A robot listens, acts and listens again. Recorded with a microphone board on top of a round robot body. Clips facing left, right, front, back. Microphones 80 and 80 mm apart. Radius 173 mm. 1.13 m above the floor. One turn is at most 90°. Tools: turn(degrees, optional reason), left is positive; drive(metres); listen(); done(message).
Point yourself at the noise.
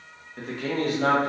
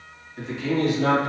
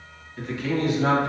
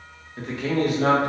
turn(degrees=90, reason="The man speaking: 145° left.")
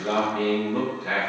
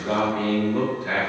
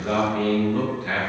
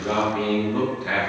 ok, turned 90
turn(degrees=90, reason="The man speaking is now 110° left.")
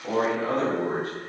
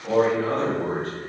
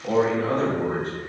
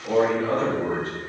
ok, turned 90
turn(degrees=20, reason="The man speaking is now 20° left.")
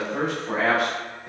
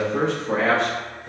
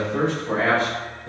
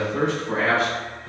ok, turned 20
turn(degrees=15, reason="The man speaking is now 15° left.")
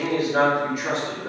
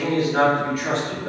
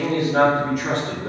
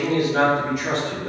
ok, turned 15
turn(degrees=10, reason="The man speaking is now 10° left.")
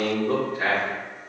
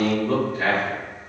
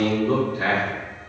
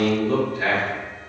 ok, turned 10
done("Found it: a man speaking, straight ahead, 2 to 4 m away.")